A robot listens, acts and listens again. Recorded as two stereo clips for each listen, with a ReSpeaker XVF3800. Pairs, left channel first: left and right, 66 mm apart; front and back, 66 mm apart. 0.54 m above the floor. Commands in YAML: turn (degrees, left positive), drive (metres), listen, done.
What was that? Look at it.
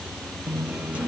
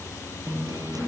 turn: -160
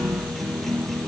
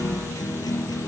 done: "Found it: a guitar, straight ahead."